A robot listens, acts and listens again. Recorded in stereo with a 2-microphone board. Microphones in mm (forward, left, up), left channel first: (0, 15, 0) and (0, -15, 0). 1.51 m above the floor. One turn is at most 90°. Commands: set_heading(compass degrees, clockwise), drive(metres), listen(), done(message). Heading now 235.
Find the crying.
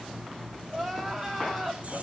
set_heading(205)
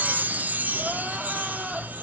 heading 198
listen()
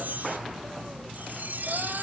listen()
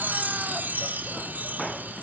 done("I heard crying, but can't make it out now. It was about 30° right or 135° left.")